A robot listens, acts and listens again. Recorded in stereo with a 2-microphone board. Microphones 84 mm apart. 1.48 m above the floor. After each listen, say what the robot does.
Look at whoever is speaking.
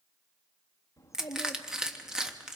Turn 35° left.
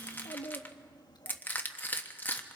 Turn 105° left.
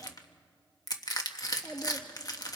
Turn 10° left.
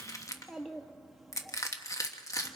Found it: a child speaking, straight ahead.